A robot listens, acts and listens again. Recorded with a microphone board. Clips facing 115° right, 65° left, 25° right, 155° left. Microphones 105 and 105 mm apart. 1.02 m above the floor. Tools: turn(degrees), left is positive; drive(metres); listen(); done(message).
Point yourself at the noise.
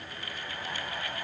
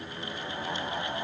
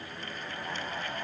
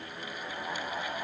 listen()
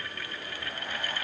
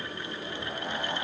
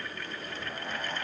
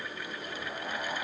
listen()
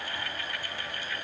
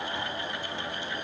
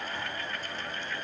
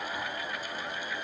done("I can't make out anything to turn to.")